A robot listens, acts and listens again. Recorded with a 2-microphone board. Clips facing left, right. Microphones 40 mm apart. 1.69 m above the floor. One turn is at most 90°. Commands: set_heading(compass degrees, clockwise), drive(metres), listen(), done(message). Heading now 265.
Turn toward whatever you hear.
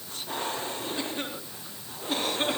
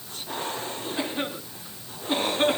set_heading(285)
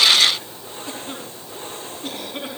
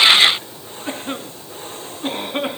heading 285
set_heading(15)
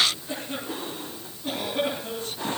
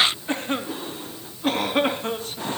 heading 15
set_heading(75)
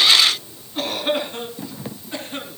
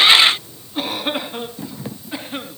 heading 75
set_heading(90)
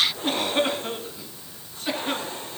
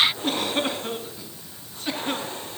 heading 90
done("Facing the cough.")